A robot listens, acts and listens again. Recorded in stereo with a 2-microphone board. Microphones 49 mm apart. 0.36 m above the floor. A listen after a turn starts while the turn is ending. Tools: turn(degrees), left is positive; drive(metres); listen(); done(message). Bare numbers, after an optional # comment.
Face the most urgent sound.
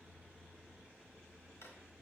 listen()
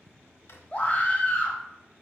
# The scream: about 25° left or 155° left.
turn(25)
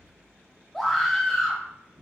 done("Facing the scream, 1 to 2 m away.")